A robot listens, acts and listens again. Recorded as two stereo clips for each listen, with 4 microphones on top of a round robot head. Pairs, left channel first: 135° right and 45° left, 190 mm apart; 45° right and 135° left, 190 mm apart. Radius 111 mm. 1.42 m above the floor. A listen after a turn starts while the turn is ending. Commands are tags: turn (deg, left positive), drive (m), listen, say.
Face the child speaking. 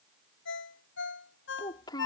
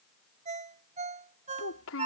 <turn deg="-65"/>
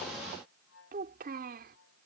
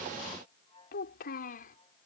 <say>Found it: a child speaking, straight ahead.</say>